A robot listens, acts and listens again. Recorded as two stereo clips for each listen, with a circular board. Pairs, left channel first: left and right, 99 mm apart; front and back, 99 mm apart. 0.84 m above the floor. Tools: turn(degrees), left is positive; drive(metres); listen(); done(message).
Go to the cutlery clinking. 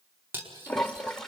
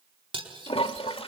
turn(degrees=-160)
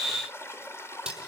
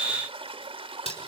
turn(degrees=-10)
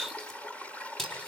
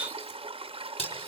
drive(metres=1.0)
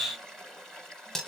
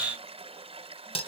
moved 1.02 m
drive(metres=1.0)
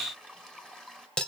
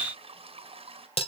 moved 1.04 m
turn(degrees=10)
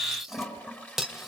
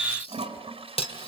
drive(metres=1.0)
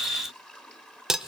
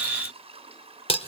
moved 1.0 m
drive(metres=1.0)
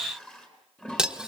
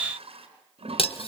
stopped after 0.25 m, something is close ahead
turn(degrees=-10)
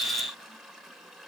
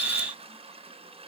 listen()
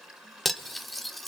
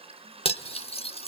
done("Arrived at the cutlery clinking, straight ahead.")